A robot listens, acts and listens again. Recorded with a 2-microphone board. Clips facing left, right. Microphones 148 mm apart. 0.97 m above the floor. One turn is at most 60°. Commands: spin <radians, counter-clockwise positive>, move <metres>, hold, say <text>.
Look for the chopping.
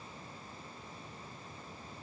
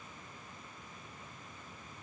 hold
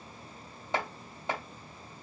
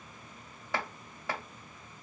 spin 0.44
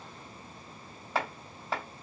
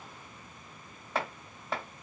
say Found it: chopping, straight ahead, 1 to 2 m away.